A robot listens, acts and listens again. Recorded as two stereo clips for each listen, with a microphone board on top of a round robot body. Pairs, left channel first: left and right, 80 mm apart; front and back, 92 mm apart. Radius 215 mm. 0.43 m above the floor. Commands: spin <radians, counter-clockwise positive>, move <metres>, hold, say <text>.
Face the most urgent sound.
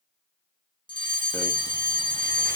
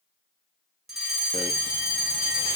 spin 1.48
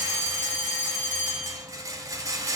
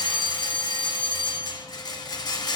spin 0.26
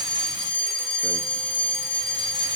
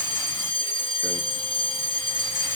say Facing the fire alarm, over 4 m away.